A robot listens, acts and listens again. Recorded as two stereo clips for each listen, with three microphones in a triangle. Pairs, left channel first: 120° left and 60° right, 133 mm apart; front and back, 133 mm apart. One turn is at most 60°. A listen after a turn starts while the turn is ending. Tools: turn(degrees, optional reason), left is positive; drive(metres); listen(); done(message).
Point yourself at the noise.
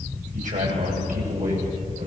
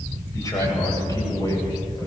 turn(degrees=-60, reason="The man speaking: 60° right.")
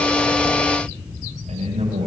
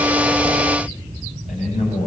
turn(degrees=-25, reason="The man speaking is now 25° right.")
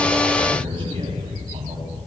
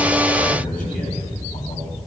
turn(degrees=-10, reason="The man speaking is now 10° right.")
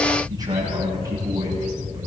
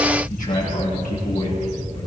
done("Facing the man speaking.")